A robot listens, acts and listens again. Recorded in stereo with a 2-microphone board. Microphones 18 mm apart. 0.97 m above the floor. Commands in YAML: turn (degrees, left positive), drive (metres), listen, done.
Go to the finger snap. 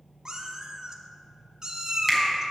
turn: 30
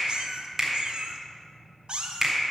turn: -25
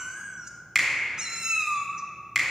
drive: 1.0
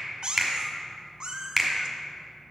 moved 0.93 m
drive: 1.0
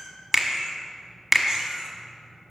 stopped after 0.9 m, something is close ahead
done: "I am next to the finger snap."